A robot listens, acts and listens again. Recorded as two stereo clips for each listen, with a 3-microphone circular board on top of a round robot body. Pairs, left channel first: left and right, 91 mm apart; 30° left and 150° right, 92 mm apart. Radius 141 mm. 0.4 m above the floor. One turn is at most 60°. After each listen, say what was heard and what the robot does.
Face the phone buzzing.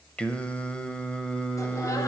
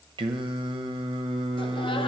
Keep listening.
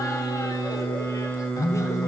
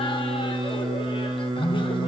The phone buzzing: 90° left. Turn 60° left.
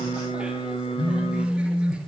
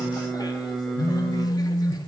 The phone buzzing is now 40° left. Turn 40° left.
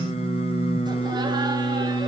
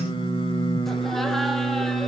Found it: a phone buzzing, straight ahead, 2 to 4 m away.